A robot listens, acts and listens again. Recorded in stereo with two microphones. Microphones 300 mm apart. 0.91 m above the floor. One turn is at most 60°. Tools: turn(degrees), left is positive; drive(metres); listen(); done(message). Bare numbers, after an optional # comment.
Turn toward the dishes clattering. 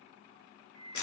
listen()
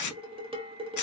# The dishes clattering: about 20° right or 160° right.
turn(-20)
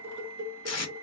# So it is at 140° right.
turn(-60)
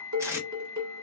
# The dishes clattering is now 70° right.
turn(-60)
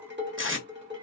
# The dishes clattering is now 40° right.
turn(-40)
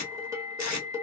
# The dishes clattering is now 10° right.
turn(-10)
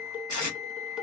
done("Facing the dishes clattering, under 1 m away.")